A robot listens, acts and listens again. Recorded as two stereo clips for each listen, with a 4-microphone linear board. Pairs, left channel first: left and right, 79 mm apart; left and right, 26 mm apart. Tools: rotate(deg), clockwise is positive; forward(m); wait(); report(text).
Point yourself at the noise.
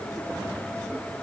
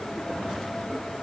wait()
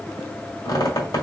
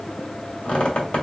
rotate(-55)
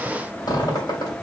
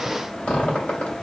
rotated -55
rotate(-65)
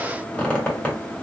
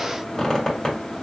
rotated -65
rotate(-15)
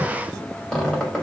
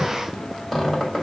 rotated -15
report("Facing the squeak.")